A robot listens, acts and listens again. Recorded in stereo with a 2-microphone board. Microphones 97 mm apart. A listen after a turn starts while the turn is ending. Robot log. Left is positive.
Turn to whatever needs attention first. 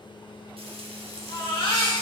note: The baby crying: about 60° left or 120° left.
cmd yaw +60
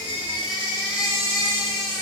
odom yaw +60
note: So it is at 55° left.
cmd yaw +55
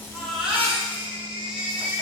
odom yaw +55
note: The baby crying is now 10° right.
cmd yaw -10
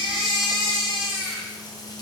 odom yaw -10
end: Found it: a baby crying, straight ahead, 2 to 4 m away.